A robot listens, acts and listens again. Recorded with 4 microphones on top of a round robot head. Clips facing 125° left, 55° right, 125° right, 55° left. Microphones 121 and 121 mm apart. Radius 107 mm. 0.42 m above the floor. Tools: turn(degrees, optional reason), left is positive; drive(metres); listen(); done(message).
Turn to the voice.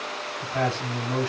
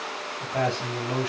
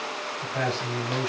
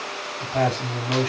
turn(degrees=10, reason="The man speaking: 10° left.")
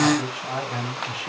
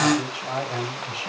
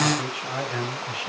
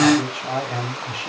done("Found it: a man speaking, straight ahead, over 4 m away.")